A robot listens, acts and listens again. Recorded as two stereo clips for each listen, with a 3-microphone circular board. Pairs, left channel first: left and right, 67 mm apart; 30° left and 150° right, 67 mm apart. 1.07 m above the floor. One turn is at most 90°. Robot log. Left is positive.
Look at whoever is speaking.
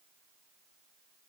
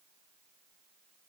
cmd idle
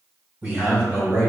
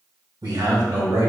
note: The man speaking: 150° right.
cmd yaw -90
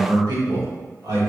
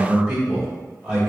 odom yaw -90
note: The man speaking is now 70° right.
cmd yaw -70
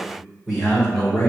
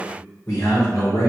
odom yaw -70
end: Facing the man speaking, 2 to 4 m away.